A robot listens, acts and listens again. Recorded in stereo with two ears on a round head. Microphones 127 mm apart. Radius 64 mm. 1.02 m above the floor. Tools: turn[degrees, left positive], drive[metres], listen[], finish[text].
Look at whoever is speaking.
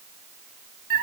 Action: listen[]
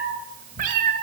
Action: listen[]
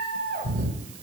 Action: finish[I can't make out anyone speaking, only a cat meowing.]